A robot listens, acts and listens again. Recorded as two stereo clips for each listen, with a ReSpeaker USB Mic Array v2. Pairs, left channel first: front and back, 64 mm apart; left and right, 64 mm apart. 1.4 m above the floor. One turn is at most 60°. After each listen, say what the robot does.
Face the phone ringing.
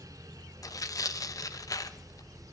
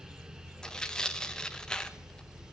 Keep listening.
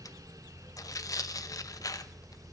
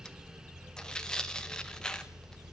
Keep listening.
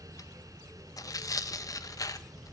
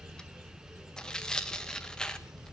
I can't make out a phone ringing to turn to.